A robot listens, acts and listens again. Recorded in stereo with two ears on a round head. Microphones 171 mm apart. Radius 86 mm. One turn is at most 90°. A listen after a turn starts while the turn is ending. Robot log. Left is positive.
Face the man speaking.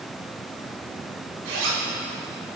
cmd idle
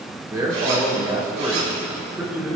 cmd yaw -30
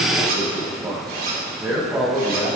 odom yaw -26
cmd yaw +30
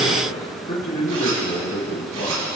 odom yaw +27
note: So it is at 155° left.
cmd yaw +90
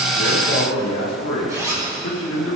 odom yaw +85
note: The man speaking is now 70° left.
cmd yaw +70
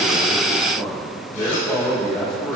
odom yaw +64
end: Facing the man speaking, 2 to 4 m away.